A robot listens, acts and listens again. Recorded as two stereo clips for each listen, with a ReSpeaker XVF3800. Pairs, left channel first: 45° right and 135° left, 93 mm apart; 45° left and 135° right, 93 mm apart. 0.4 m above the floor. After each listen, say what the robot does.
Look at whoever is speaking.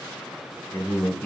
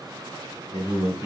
Turn 25° left.
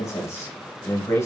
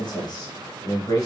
Turn 10° left.
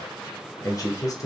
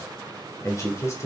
Facing the man speaking.